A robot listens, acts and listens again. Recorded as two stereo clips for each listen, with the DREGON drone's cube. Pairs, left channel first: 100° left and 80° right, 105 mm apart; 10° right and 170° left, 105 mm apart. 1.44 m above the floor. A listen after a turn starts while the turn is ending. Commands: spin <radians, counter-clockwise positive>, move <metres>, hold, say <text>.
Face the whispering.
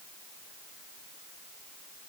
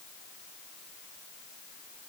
hold
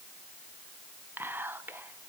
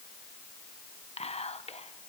say Facing the whispering, under 1 m away.